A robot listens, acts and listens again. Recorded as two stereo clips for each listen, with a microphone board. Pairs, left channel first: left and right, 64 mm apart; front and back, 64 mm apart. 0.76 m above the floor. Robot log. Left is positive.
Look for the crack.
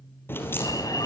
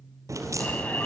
note: The crack: 145° left.
cmd yaw +145
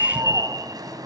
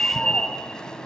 end: Facing where the crack came from. I can't hear it now.